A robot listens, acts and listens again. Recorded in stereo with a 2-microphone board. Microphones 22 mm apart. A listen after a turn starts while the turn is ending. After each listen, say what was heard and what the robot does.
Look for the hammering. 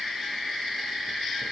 Keep listening.
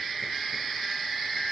Keep listening.
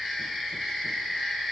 I can't make out hammering.